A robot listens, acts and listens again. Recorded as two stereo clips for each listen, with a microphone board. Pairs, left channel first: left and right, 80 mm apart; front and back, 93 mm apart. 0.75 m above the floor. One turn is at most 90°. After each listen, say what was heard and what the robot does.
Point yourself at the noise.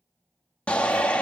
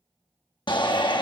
The shout: 15° left. Turn 15° left.
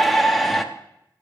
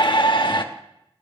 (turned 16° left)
Facing the shout.